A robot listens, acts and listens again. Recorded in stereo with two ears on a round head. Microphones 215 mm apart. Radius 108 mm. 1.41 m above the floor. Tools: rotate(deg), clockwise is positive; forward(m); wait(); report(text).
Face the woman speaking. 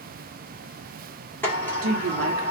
rotate(65)
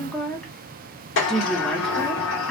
report("Facing the woman speaking, 1 to 2 m away.")